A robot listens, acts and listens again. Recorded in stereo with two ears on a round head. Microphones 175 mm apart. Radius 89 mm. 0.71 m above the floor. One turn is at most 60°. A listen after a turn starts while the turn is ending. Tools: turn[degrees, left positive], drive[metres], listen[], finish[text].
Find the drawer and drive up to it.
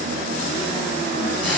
Action: listen[]
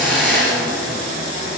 Action: listen[]
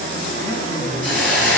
Action: finish[I can't make out a drawer to turn to.]